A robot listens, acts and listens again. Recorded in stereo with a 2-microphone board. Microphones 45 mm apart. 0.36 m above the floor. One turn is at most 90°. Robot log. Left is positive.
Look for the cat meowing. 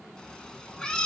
note: The cat meowing: about 15° left or 165° left.
cmd yaw +15
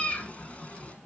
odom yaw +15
note: So it is at 150° left.
cmd yaw +90
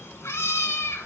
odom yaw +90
note: The cat meowing is now 90° left.
cmd yaw +90
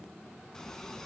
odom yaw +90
note: The cat meowing is now 15° left.
cmd yaw +15
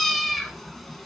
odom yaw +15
end: Found it: a cat meowing, straight ahead.